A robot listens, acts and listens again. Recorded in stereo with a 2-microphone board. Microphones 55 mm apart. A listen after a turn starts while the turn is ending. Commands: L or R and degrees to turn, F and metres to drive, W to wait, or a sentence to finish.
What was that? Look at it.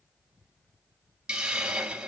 R20
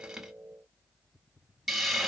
Facing the hiss, under 1 m away.